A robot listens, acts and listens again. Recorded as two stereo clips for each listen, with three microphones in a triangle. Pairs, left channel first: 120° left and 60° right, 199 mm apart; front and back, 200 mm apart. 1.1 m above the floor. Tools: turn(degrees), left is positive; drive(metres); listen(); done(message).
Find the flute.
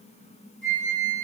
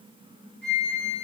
turn(degrees=-15)
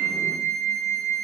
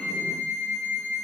done("Facing the flute, 1 to 2 m away.")